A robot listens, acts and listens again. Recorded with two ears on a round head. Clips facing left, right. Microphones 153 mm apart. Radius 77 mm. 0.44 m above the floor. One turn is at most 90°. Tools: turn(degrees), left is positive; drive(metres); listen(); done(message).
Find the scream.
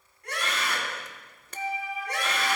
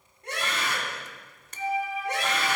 turn(degrees=-20)
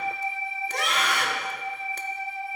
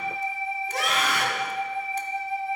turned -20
done("Facing the scream, over 4 m away.")